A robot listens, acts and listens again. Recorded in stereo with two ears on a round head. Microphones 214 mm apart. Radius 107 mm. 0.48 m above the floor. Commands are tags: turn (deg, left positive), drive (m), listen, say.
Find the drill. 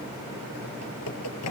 <listen/>
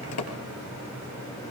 <listen/>
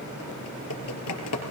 <say>I can't make out a drill, only typing on a keyboard.</say>